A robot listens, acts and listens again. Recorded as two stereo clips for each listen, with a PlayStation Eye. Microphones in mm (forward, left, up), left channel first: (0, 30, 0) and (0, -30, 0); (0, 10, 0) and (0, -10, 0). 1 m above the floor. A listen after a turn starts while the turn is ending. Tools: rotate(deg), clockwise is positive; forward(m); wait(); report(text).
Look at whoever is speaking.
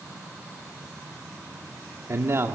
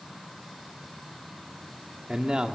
rotate(50)
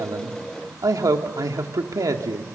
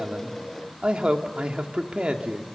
rotate(80)
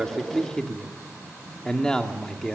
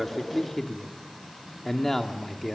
rotate(-15)
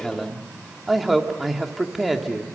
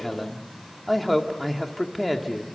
report("Found it: a man speaking, straight ahead, 2 to 4 m away.")